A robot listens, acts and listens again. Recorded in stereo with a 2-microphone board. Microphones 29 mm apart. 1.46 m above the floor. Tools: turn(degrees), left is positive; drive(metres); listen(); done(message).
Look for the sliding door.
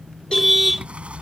turn(degrees=-40)
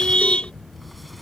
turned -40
listen()
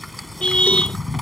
done("Facing the sliding door.")